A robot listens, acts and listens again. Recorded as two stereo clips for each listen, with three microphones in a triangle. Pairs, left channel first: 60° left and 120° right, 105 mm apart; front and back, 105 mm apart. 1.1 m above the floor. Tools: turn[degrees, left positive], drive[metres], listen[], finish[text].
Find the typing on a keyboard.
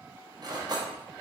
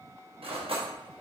Action: listen[]
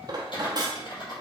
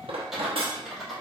Thought: The typing on a keyboard: 90° left.
Action: turn[90]
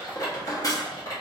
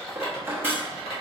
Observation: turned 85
Action: finish[Found it: typing on a keyboard, straight ahead, 2 to 4 m away.]